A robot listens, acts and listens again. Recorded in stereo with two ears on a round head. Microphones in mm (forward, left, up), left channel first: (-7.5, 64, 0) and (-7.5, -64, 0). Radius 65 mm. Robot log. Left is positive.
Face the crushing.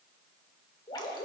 cmd idle
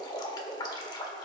cmd idle
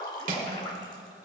note: The crushing: about 60° right or 120° right.
cmd yaw -60
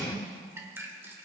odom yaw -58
cmd idle
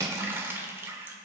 note: So it is at 30° right.
cmd yaw -30
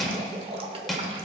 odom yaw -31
end: Found it: crushing, straight ahead, 1 to 2 m away.